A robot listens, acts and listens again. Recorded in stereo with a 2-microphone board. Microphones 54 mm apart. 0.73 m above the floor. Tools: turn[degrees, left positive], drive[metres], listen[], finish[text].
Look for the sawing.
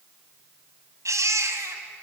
Action: listen[]
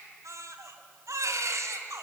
Action: listen[]
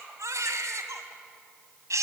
Action: finish[I can't make out sawing, only a baby crying.]